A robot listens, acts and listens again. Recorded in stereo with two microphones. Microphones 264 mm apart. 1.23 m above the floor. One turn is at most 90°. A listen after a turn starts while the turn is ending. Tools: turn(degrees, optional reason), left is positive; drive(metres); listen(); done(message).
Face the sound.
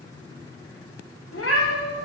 turn(degrees=60, reason="The cat meowing: about 60° left or 120° left.")
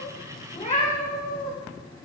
turn(degrees=35, reason="So it is at 35° left.")
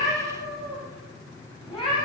turn(degrees=20, reason="The cat meowing is now 20° left.")
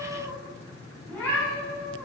done("Facing the cat meowing, 2 to 4 m away.")